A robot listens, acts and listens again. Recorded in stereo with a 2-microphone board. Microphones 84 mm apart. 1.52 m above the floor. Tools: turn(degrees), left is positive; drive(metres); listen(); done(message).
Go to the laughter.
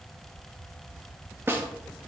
listen()
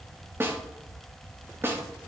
listen()
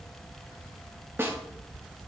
done("I can't make out laughter to turn to.")